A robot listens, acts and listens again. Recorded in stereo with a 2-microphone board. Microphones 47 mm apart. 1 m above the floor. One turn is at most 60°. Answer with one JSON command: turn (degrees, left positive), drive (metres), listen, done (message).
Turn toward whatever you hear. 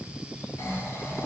{"turn": 60}
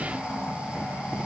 {"turn": 10}
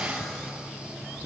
{"listen": true}
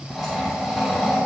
{"done": "Facing the snoring, over 4 m away."}